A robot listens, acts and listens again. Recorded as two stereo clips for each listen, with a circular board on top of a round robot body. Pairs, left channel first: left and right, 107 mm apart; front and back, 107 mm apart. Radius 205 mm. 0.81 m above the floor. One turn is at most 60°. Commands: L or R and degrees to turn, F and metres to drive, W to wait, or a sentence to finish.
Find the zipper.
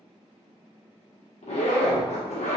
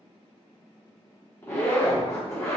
L60
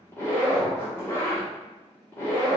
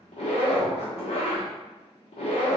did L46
L20
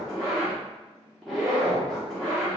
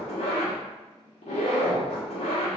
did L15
Facing the zipper, 1 to 2 m away.